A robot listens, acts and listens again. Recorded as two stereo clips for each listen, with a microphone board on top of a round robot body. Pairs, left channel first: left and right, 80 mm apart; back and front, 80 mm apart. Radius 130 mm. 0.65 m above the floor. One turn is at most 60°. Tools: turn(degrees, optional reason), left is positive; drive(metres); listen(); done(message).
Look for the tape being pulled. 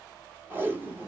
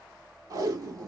turn(degrees=-30, reason="The tape being pulled: 30° right.")
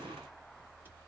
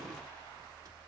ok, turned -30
listen()
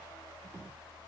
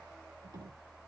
turn(degrees=-30, reason="The tape being pulled is now 30° right.")
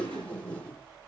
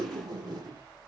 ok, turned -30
turn(degrees=15, reason="The tape being pulled is now 15° left.")
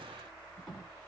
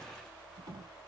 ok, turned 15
done("Found it: tape being pulled, straight ahead.")